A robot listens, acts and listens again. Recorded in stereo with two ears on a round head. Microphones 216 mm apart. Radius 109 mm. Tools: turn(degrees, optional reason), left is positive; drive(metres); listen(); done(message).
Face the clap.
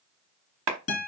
turn(degrees=-70, reason="The clap: about 70° right or 110° right.")
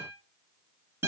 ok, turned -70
listen()
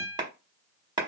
turn(degrees=-20, reason="So it is at 20° right.")
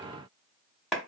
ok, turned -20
done("Facing the clap, under 1 m away.")